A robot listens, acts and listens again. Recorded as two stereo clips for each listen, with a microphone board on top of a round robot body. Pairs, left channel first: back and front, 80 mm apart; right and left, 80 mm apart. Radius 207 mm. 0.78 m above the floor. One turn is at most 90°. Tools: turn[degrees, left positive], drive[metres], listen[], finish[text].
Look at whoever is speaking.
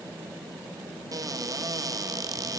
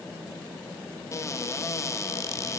Action: listen[]
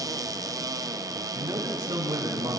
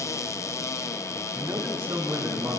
Thought: The man speaking: 50° left.
Action: turn[50]
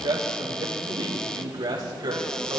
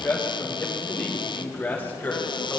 Thought: The man speaking is now 20° right.
Action: turn[-20]
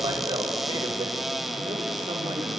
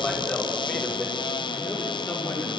Action: finish[Facing the man speaking.]